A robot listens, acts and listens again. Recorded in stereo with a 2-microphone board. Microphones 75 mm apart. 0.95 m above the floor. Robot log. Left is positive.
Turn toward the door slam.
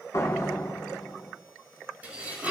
note: The door slam: about 50° left or 130° left.
cmd yaw +50
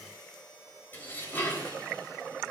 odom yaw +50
cmd idle
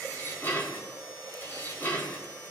end: I heard a door slam, but can't make it out now. It was about straight ahead or 80° left.